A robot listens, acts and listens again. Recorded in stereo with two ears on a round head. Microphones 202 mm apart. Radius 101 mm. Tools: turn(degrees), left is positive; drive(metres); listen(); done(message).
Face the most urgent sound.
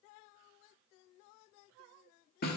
listen()
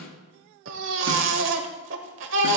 turn(degrees=-60)
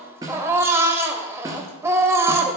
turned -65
turn(degrees=-15)
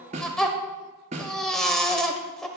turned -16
done("Found it: a baby crying, straight ahead, 1 to 2 m away.")